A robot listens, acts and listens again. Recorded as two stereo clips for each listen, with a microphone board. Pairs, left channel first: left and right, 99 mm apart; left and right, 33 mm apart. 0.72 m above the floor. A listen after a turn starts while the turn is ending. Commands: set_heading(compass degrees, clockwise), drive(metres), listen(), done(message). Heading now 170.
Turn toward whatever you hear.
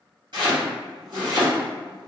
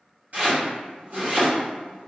set_heading(225)
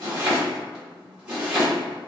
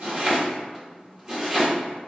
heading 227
set_heading(242)
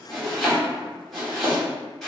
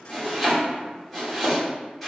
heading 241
done("Facing the chopping, 1 to 2 m away.")